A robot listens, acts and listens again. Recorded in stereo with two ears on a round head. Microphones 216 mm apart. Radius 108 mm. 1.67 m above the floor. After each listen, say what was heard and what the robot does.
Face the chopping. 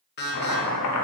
Turn 90° left.
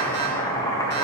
So it is at 15° left. Turn 15° left.
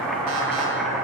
Facing the chopping, 1 to 2 m away.